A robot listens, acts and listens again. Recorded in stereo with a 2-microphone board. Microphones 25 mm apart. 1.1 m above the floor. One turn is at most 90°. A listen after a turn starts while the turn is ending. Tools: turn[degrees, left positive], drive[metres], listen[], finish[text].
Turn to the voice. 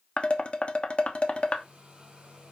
Action: listen[]
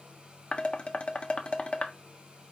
Action: listen[]
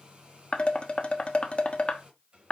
Action: finish[I can't make out anyone speaking to turn to.]